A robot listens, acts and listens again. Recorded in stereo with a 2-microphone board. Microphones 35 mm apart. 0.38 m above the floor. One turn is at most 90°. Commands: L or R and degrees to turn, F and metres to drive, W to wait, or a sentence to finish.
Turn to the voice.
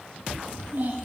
R65
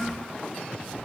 R15
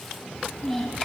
Found it: a child speaking, straight ahead, 1 to 2 m away.